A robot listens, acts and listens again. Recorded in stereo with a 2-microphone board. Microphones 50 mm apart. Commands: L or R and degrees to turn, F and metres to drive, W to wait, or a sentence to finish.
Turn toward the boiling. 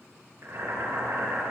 R75
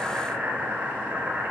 R35
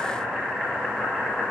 L20
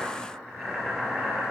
Found it: boiling, straight ahead, 2 to 4 m away.